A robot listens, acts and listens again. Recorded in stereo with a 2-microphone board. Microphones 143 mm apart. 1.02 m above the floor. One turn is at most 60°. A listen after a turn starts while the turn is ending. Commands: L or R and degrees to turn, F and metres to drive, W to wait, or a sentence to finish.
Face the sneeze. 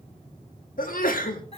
L60
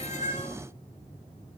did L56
L35
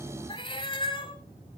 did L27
Facing where the sneeze came from. I can't hear it now.